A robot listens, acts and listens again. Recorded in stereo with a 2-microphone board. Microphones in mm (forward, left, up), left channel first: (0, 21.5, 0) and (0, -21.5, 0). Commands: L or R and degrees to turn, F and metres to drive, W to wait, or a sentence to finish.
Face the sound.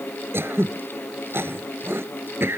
R65
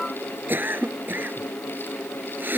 R55
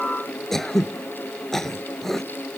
Found it: throat clearing, straight ahead.